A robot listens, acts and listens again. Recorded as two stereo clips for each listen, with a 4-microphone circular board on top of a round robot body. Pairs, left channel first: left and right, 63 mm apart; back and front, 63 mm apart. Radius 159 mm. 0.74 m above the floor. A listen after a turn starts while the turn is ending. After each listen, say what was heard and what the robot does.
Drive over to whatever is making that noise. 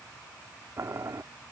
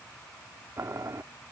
The boiling: 45° right. Turn 45° right.
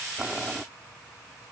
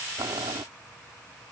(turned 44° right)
Keep listening.
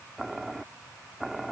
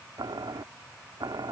Drive 1.0 m forward.
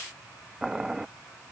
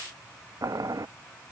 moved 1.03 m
The boiling is now 10° right. Turn 10° right.
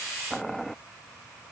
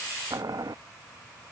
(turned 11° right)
Drive 1.0 m forward.
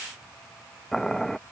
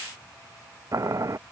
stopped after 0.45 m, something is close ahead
The boiling is now 10° left. Turn 10° left.
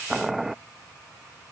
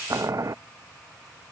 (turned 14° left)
I am next to the boiling.